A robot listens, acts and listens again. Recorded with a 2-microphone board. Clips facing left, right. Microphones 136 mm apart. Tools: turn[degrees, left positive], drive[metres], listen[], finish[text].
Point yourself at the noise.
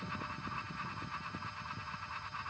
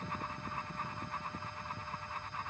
Action: listen[]
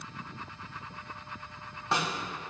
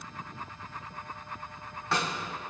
Thought: The snare drum: about 25° left or 155° left.
Action: turn[25]
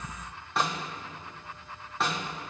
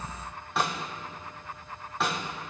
Action: finish[Facing the snare drum, 1 to 2 m away.]